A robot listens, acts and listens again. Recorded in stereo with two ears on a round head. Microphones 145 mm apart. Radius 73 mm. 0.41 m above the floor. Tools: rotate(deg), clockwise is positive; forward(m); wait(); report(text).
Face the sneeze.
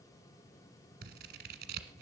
wait()
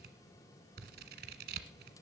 wait()
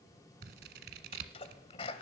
rotate(-35)
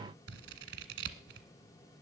wait()
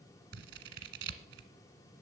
report("I heard a sneeze, but can't make it out now. It was about straight ahead or 110° left.")